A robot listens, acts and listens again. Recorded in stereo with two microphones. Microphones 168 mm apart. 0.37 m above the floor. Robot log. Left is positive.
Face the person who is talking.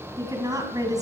note: The woman speaking: about 20° right or 160° right.
cmd yaw -20
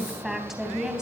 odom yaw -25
end: Facing the woman speaking.